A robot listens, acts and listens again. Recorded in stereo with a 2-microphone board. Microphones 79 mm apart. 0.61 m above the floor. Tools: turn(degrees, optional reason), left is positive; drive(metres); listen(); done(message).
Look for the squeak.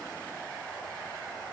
listen()
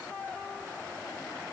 listen()
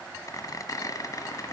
turn(degrees=50, reason="The squeak: about 50° left or 130° left.")
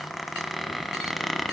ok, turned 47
done("Found it: a squeak, straight ahead, 1 to 2 m away.")